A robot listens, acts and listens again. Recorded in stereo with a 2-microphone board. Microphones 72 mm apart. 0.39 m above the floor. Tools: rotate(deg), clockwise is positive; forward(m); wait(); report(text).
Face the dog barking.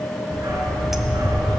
rotate(60)
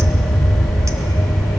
rotate(60)
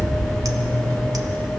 rotate(25)
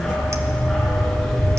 report("Found it: a dog barking, straight ahead, 2 to 4 m away.")